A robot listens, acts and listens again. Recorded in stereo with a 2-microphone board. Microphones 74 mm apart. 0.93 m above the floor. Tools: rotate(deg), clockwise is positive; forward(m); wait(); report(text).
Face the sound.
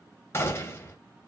rotate(-35)
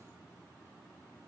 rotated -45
wait()
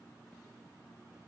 report("I heard a gunshot, but can't make it out now. It was about 10° right or 100° left.")